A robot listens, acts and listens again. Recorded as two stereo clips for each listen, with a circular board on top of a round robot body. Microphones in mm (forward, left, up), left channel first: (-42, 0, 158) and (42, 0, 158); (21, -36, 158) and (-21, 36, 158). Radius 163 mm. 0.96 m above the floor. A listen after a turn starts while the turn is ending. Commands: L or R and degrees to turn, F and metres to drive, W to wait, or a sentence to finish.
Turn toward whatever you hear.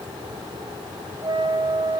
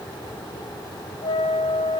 R40
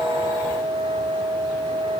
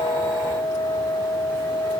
R10
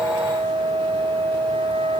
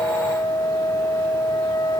Found it: a flute, straight ahead, 2 to 4 m away.